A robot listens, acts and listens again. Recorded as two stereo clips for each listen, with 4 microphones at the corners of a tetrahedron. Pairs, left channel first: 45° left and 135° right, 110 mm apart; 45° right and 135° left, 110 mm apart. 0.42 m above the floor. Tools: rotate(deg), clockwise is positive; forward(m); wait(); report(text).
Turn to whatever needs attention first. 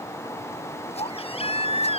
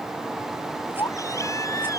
rotate(-15)
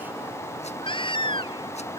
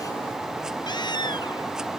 report("Found it: a baby crying, straight ahead.")